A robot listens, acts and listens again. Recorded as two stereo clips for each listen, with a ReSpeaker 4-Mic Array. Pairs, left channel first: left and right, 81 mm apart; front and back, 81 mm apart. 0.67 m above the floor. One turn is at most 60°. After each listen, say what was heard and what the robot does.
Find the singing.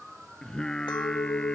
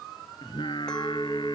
The singing: 10° left. Turn 10° left.
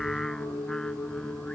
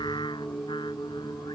The singing is now 10° left. Turn 10° left.
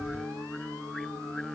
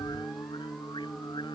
Found it: singing, straight ahead.